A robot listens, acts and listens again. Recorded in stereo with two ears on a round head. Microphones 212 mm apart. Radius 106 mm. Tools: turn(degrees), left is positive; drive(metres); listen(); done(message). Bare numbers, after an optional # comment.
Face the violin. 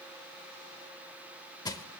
listen()
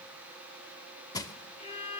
# The violin: about 25° left or 155° left.
turn(25)
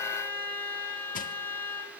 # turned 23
# So it is at 10° left.
turn(10)
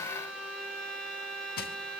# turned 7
done("Found it: a violin, straight ahead.")